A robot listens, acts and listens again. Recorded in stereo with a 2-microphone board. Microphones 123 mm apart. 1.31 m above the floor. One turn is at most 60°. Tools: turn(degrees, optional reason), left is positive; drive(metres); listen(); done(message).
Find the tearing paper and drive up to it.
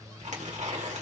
turn(degrees=-60, reason="The tearing paper: about 75° right or 105° right.")
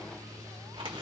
turn(degrees=-45, reason="So it is at 45° right.")
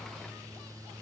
listen()
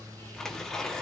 drive(metres=1.0)
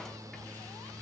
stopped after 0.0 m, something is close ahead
listen()
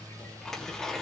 done("Blocked. The tearing paper is further on, straight ahead.")